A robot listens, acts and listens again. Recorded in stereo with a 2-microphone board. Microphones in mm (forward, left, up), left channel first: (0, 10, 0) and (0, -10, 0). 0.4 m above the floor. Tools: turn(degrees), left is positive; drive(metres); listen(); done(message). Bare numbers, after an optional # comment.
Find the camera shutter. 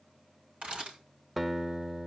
# The camera shutter: about 75° right or 105° right.
turn(-75)
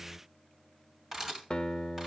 # So it is at 15° right.
turn(-15)
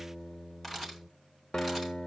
done("Facing the camera shutter, over 4 m away.")